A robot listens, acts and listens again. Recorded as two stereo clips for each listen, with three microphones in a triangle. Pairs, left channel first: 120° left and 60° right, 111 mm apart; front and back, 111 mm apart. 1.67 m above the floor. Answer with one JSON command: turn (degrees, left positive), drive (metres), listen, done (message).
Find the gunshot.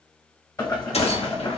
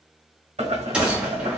{"turn": 100}
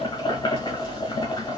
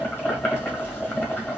{"done": "Facing where the gunshot came from. I can't hear it now."}